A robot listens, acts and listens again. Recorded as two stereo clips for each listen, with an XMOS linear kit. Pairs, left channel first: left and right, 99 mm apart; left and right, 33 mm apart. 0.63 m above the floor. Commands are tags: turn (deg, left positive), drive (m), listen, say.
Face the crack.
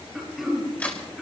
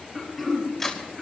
<turn deg="15"/>
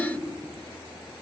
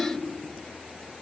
<listen/>
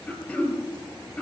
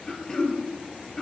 <say>I heard a crack, but can't make it out now. It was about straight ahead or 150° left.</say>